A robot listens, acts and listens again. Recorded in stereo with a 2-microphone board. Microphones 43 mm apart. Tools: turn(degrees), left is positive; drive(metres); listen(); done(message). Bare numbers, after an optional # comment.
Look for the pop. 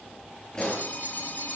# The pop: about 20° left or 160° left.
turn(20)
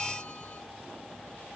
listen()
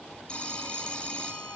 done("I heard a pop, but can't make it out now. It was about straight ahead or 140° left.")